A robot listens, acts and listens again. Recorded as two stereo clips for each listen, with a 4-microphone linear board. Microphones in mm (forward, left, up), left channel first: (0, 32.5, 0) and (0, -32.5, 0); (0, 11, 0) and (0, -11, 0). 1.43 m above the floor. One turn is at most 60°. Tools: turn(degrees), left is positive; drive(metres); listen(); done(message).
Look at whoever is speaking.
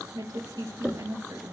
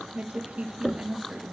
turn(degrees=-60)
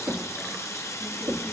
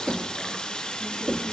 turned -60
turn(degrees=-30)
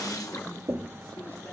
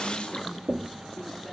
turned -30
listen()
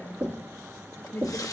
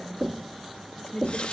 turn(degrees=35)
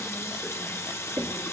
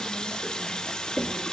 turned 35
listen()
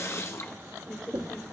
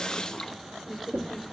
done("Found it: a woman speaking, straight ahead.")